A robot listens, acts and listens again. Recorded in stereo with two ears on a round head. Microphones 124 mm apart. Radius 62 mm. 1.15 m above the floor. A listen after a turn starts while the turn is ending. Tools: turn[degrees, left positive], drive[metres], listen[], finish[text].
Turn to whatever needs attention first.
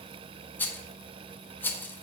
Action: listen[]
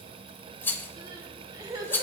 Thought: The crying: about 25° right or 155° right.
Action: turn[-25]
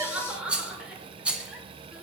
Thought: So it is at 10° right.
Action: turn[-10]
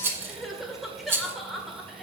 Action: finish[Found it: crying, straight ahead, 1 to 2 m away.]